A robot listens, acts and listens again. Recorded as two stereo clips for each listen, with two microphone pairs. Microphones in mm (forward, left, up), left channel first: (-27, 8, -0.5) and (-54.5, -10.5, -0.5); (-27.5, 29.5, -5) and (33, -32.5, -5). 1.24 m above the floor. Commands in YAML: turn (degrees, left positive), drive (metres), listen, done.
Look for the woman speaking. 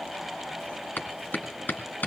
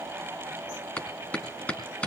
listen: true
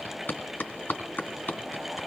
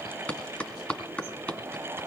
listen: true
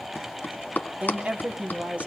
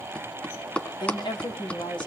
turn: 165
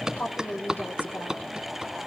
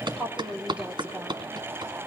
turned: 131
turn: 30
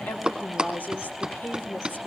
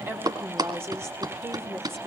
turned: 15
turn: 15
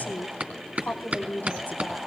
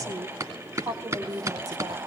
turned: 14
done: "Facing the woman speaking, 2 to 4 m away."